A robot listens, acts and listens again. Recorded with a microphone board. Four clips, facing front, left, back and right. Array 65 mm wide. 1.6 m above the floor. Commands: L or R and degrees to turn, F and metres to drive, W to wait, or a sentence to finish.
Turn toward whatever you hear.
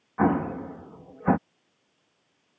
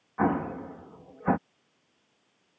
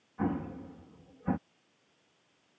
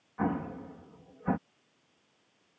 L25
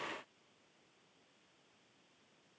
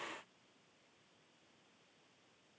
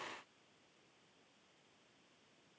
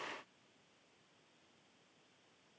Facing where the explosion came from. I can't hear it now.